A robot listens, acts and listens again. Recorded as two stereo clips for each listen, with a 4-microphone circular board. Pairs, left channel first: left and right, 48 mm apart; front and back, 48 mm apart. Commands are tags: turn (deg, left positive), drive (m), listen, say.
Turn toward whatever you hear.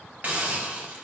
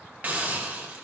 <turn deg="-130"/>
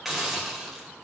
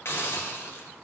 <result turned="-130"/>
<say>Facing the hiss.</say>